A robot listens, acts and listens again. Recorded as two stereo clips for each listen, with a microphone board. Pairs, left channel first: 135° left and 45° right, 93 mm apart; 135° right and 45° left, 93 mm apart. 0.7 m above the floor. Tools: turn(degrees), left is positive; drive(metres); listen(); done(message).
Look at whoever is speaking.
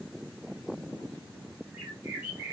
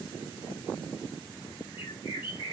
listen()
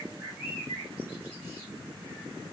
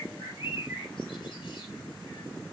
listen()
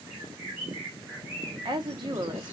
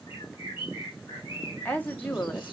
turn(degrees=-65)
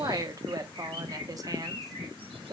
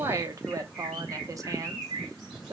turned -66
done("Found it: a woman speaking, straight ahead, under 1 m away.")